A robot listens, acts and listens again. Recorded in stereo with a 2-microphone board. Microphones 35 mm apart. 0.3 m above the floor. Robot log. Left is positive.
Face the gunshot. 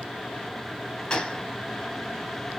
note: The gunshot: about 20° left or 160° left.
cmd yaw +20
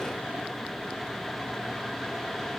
cmd idle
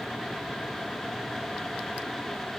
end: I heard a gunshot, but can't make it out now. It was about straight ahead or 140° left.